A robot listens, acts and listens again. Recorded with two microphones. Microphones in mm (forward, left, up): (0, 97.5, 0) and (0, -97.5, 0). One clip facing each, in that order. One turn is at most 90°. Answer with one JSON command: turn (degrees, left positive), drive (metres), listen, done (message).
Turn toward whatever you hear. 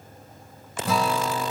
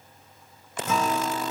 {"turn": 35}
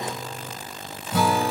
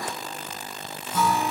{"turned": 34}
{"turn": 90}
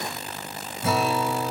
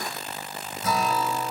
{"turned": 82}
{"turn": 30}
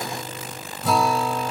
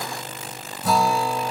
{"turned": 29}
{"done": "Facing the guitar."}